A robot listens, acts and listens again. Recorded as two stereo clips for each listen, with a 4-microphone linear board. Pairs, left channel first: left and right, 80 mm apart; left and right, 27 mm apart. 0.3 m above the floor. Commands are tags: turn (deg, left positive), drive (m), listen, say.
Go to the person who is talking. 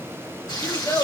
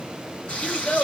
<turn deg="55"/>
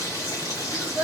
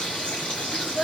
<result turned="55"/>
<turn deg="10"/>
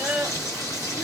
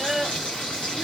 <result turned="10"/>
<drive m="1.0"/>
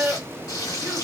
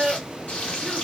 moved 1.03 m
<drive m="1.0"/>
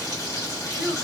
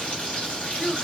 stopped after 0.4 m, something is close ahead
<turn deg="-10"/>
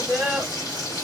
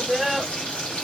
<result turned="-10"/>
<say>I am next to the child speaking.</say>